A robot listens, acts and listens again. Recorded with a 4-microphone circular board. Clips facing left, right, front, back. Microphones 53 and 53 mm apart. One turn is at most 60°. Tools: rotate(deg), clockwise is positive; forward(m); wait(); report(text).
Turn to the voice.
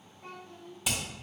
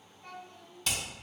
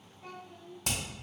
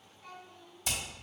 rotate(-60)
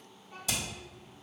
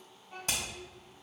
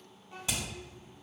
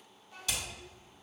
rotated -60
rotate(10)
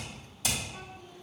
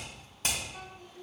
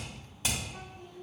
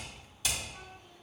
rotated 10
report("Facing the child speaking, 2 to 4 m away.")